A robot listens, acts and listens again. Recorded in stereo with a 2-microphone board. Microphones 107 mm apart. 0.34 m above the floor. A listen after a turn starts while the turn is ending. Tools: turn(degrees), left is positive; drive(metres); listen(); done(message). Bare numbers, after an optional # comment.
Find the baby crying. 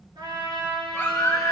# The baby crying: about 20° left or 160° left.
turn(20)
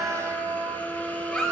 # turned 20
done("Found it: a baby crying, straight ahead.")